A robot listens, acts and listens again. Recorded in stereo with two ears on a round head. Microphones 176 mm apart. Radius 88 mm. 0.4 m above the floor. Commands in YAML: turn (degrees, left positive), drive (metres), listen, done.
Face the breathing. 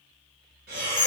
turn: -55
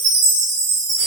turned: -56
listen: true
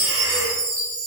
listen: true
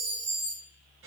done: "I heard breathing, but can't make it out now. It was about straight ahead or 70° right."